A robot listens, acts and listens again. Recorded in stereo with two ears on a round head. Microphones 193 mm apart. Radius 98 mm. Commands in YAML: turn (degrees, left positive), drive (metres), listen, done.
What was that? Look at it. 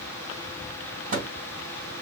turn: -40
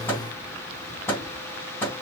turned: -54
turn: 10
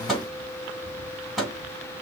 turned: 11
done: "Found it: a microwave, straight ahead, 2 to 4 m away."